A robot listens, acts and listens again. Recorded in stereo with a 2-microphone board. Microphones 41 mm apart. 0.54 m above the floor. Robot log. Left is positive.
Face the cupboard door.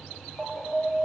cmd idle
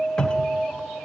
note: The cupboard door: about 20° left or 160° left.
cmd yaw +20
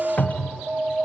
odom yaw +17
note: So it is at 145° left.
cmd yaw +145
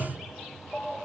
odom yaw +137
end: Facing the cupboard door, 1 to 2 m away.